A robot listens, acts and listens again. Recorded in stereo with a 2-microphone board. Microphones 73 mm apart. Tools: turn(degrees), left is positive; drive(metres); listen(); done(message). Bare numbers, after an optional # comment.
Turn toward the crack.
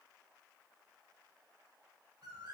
listen()
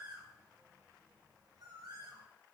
listen()
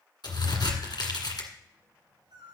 turn(90)
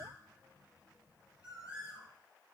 done("I heard a crack from this way, but can't make it out now.")